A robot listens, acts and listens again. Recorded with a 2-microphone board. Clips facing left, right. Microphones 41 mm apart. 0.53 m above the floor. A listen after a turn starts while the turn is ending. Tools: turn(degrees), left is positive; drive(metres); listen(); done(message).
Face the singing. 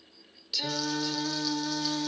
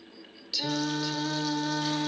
turn(degrees=-20)
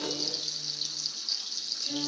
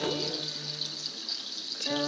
turn(degrees=-120)
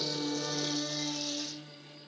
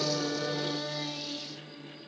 turn(degrees=-10)
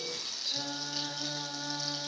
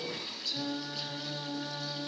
done("Found it: singing, straight ahead.")